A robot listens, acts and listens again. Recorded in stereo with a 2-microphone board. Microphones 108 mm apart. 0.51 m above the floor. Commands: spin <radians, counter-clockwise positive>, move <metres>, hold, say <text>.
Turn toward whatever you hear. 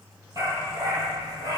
spin -0.52
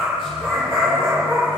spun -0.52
say Found it: a dog barking, straight ahead.